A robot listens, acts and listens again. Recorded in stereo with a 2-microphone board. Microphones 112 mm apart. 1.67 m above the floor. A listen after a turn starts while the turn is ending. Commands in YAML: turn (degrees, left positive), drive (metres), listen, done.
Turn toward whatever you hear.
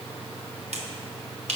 turn: -70
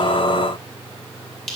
done: "Facing the finger snap."